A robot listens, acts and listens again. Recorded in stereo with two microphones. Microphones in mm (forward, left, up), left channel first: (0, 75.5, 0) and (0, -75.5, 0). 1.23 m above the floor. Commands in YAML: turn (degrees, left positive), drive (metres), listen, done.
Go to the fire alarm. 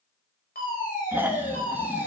turn: 90
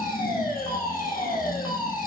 drive: 1.0
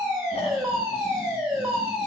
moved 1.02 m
drive: 1.0
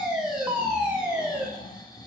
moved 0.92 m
drive: 1.0
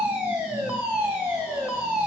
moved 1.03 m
turn: -10
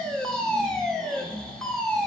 drive: 1.0
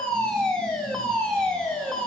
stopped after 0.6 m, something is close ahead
done: "Arrived at the fire alarm, straight ahead."